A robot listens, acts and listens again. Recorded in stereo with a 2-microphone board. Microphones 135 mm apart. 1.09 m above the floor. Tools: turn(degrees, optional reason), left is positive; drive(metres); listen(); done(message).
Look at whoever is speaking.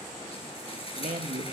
turn(degrees=-65, reason="The man speaking: about 65° right or 115° right.")
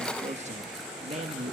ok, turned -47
turn(degrees=-60, reason="So it is at 60° right.")
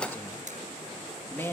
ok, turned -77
turn(degrees=20, reason="The man speaking is now 20° left.")
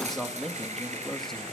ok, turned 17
done("Found it: a man speaking, straight ahead, 1 to 2 m away.")